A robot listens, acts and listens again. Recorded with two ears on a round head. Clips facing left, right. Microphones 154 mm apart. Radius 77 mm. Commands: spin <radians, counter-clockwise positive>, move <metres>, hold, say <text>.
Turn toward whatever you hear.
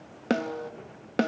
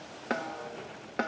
spin 0.70
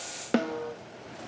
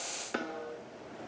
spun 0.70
spin 1.66
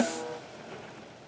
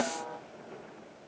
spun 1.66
spin 0.52
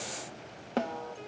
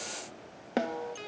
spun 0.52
spin -0.26
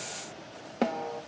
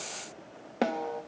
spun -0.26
say Found it: a snare drum, straight ahead, 1 to 2 m away.